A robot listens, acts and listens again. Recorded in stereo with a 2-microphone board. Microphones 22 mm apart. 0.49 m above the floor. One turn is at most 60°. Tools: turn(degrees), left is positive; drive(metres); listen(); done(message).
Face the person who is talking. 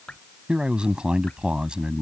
turn(degrees=-55)
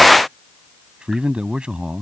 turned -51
turn(degrees=-60)
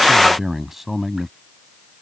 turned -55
turn(degrees=-15)
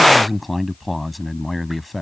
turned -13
done("Facing the man speaking.")